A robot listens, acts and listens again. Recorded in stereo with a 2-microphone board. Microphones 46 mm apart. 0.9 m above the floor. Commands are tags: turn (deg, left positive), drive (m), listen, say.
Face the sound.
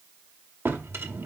<turn deg="-65"/>
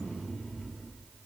<say>Found it: a drawer, straight ahead.</say>